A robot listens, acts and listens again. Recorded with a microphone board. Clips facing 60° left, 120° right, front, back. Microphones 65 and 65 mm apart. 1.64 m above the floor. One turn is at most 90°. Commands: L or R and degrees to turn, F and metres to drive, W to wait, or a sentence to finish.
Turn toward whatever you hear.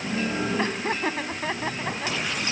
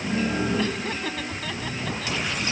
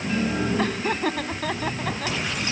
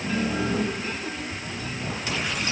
Facing the laughter.